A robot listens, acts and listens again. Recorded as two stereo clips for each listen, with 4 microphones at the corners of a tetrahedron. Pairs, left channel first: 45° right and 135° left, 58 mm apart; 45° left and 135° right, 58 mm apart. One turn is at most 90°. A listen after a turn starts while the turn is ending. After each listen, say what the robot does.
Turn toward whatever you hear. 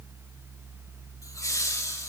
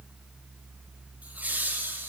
Turn 75° right.
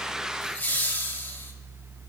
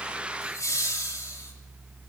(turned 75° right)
Turn 10° left.
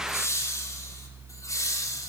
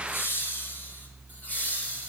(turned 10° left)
Turn 20° right.
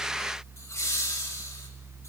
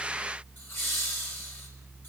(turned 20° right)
Found it: laughter, straight ahead, 2 to 4 m away.